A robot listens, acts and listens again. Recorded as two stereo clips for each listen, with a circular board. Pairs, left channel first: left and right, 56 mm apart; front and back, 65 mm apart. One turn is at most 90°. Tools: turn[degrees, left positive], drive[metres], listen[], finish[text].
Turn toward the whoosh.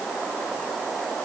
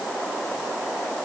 Action: listen[]
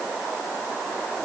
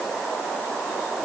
Action: listen[]
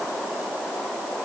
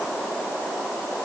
Action: finish[I can't make out a whoosh to turn to.]